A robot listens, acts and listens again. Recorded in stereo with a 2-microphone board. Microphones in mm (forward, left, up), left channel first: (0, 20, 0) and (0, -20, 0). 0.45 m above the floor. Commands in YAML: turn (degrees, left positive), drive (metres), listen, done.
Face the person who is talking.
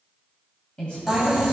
turn: 25
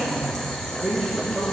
done: "Facing the woman speaking, 2 to 4 m away."